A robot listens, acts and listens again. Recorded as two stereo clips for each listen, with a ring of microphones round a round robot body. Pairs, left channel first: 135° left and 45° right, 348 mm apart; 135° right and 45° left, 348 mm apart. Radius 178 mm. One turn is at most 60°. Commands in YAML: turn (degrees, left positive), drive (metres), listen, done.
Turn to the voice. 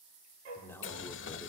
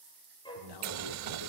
turn: -60
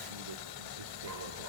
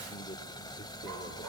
turn: -60
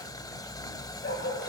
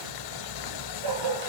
turn: -20
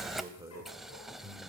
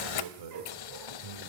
turn: 40
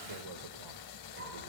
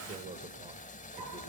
turn: -25
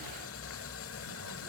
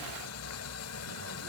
listen: true
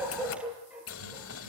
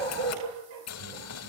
listen: true
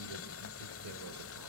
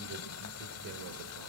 done: "Facing where the man speaking came from. I can't hear it now."